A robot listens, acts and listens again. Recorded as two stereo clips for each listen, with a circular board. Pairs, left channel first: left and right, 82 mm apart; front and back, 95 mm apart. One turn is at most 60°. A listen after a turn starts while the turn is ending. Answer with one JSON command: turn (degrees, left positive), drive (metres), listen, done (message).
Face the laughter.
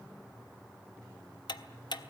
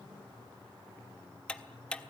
{"listen": true}
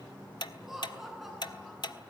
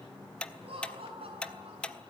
{"turn": -60}
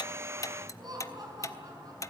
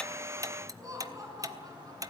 {"turn": -60}
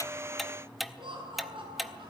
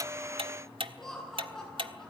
{"turn": -60}
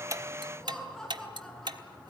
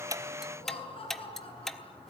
{"done": "Found it: laughter, straight ahead."}